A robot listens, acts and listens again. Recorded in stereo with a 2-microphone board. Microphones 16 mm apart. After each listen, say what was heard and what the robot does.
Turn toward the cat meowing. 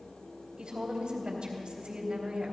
Keep listening.
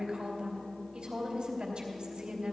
Keep listening.
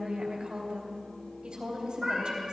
The cat meowing: about 25° right or 155° right. Turn 25° right.
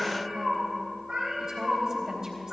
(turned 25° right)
So it is at 125° right. Turn 125° right.
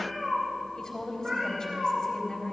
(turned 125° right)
The cat meowing is now 50° right. Turn 50° right.
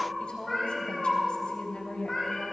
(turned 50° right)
Found it: a cat meowing, straight ahead, over 4 m away.